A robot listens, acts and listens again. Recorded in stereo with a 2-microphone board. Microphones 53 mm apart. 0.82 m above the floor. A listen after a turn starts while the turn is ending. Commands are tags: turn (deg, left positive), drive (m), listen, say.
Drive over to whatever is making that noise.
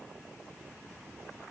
<listen/>
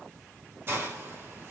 <turn deg="-45"/>
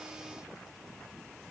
<listen/>
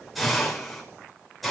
<drive m="1.0"/>
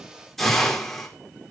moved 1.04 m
<drive m="1.0"/>
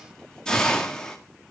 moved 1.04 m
<turn deg="15"/>
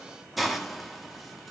<drive m="1.0"/>
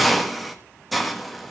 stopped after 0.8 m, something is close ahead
<say>Arrived at the hiss, straight ahead.</say>